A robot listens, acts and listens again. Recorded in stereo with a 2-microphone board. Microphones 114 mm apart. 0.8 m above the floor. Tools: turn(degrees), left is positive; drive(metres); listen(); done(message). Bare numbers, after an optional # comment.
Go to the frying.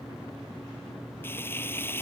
# The frying: about 20° left or 160° left.
turn(20)
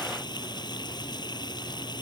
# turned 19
# So it is at 140° left.
turn(140)
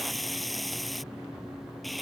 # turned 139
drive(1.0)
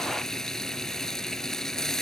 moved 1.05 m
drive(1.0)
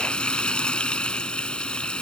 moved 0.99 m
# The frying is now 10° left.
turn(10)
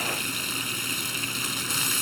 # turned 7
drive(1.0)
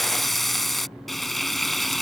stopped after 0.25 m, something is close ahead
done("Arrived at the frying, straight ahead.")